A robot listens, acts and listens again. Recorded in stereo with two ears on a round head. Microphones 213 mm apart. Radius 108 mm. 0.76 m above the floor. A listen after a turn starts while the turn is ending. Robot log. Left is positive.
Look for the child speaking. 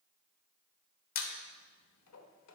cmd idle
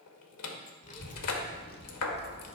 note: The child speaking: about 55° left or 125° left.
cmd yaw +55
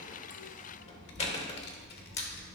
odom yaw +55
note: So it is at 40° left.
cmd yaw +40
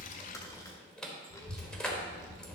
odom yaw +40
note: The child speaking is now 15° left.
cmd yaw +15
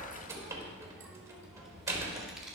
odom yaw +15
end: Facing the child speaking.